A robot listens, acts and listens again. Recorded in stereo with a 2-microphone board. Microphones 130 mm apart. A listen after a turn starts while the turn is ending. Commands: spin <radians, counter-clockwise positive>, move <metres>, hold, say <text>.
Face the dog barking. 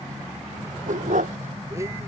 spin -1.57
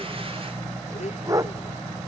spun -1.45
spin -0.44
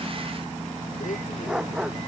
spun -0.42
say Facing the dog barking.